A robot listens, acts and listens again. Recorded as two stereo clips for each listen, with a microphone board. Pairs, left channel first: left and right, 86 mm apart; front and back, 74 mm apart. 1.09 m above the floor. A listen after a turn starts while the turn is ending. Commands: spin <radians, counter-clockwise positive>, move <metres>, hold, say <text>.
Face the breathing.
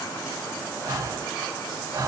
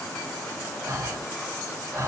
spin -2.36
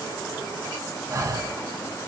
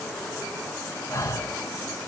spin -0.70
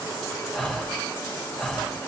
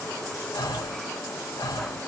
say Found it: breathing, straight ahead.